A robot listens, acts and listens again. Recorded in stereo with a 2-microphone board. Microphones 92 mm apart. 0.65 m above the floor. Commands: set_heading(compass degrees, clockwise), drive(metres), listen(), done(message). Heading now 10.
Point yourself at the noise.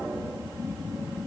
listen()
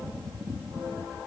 listen()
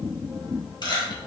set_heading(315)
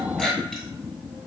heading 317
done("Facing the camera shutter, 1 to 2 m away.")